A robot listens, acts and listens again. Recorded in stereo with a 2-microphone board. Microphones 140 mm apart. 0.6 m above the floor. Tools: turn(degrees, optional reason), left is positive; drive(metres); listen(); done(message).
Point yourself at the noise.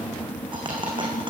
turn(degrees=-35, reason="The dropped coin: about 35° right or 145° right.")
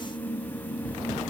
listen()
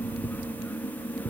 done("I heard a dropped coin, but can't make it out now. It was about straight ahead or 110° right.")